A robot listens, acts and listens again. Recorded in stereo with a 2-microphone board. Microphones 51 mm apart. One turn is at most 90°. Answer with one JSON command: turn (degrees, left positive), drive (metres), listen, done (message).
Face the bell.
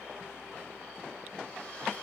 {"listen": true}
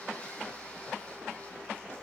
{"listen": true}
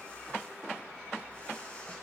{"done": "I can't make out a bell to turn to."}